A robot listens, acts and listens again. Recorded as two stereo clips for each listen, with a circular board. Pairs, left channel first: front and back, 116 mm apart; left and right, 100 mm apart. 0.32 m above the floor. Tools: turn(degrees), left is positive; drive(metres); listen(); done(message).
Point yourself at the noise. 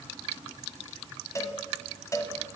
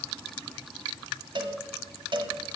turn(degrees=-60)
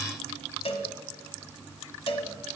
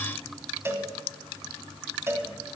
turn(degrees=-25)
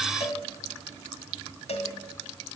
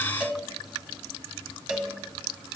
done("Found it: a cowbell, straight ahead.")